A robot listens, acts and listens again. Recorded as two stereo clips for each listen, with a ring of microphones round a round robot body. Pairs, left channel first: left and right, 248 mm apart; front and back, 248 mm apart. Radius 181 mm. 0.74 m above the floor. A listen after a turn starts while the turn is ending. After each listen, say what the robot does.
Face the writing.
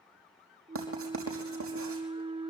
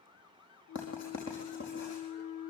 Turn 60° right.
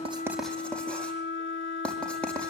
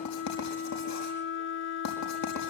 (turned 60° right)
Found it: writing, straight ahead, over 4 m away.